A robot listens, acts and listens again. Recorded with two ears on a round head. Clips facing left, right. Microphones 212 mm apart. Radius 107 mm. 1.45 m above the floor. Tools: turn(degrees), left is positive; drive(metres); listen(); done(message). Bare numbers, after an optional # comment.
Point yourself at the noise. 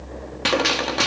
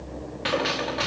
# The gunshot: about 55° left or 125° left.
turn(55)
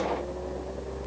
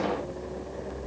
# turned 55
listen()
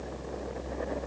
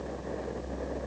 done("I heard a gunshot, but can't make it out now. It was about straight ahead or 70° left.")